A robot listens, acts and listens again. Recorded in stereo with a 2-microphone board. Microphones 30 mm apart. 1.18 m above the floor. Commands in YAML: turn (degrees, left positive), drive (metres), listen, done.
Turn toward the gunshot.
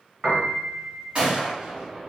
turn: -40
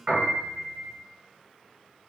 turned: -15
listen: true
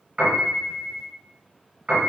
done: "I heard a gunshot, but can't make it out now. It was about 25° right or 125° right."